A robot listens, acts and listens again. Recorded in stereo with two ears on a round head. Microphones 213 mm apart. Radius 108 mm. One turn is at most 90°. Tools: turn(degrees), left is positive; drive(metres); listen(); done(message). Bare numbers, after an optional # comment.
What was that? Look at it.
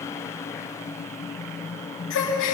# The gasp: about 55° left or 125° left.
turn(55)
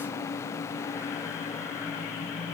listen()
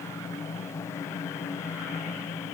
done("I heard a gasp, but can't make it out now. It was about straight ahead or 70° left.")